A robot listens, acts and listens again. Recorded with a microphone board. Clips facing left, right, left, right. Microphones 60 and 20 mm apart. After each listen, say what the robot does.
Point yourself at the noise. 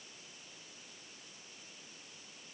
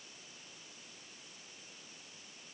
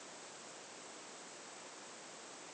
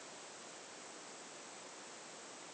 Keep listening.
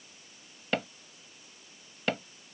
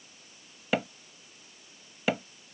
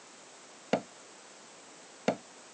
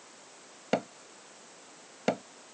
Turn 30° right.
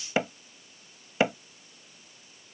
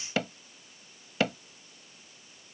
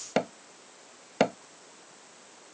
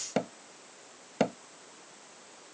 Turn 20° left.
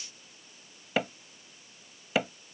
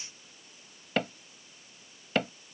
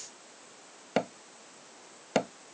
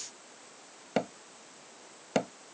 Facing the hammering.